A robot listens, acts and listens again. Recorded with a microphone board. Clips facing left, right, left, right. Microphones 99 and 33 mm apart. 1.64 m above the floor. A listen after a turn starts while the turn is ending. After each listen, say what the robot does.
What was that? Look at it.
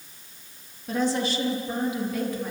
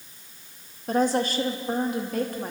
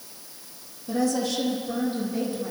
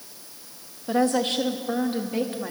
Turn 50° right.
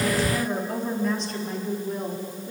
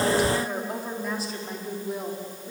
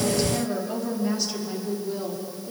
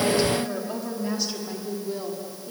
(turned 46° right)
Found it: a woman speaking, straight ahead, over 4 m away.